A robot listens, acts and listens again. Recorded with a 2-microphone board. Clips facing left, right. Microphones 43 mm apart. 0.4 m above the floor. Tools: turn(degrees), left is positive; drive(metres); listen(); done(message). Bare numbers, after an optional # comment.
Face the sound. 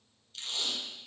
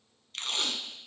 # The tape being pulled: about 70° right or 110° right.
turn(-70)
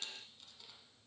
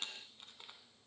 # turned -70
# So it is at 40° right.
turn(-40)
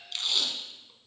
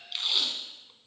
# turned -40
# The tape being pulled is now 10° right.
turn(-10)
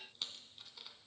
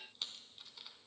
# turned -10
done("Found it: tape being pulled, straight ahead.")